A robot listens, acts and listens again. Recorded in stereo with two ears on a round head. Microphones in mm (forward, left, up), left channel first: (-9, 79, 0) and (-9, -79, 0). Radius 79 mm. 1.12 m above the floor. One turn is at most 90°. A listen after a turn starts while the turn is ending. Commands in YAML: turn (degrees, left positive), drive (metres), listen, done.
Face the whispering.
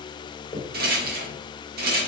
listen: true
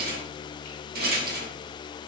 listen: true
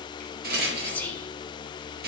turn: 30
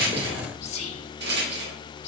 turn: 90
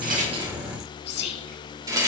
turn: 75
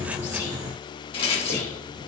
listen: true
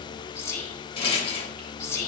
turn: 15
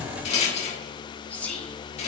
turn: 10
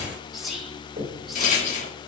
done: "Found it: whispering, straight ahead, 1 to 2 m away."